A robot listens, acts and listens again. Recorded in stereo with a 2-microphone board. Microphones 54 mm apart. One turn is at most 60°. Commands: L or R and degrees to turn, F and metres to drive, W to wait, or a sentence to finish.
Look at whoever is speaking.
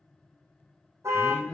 L20
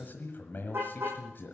L60
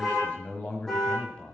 L20
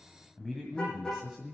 Facing the man speaking.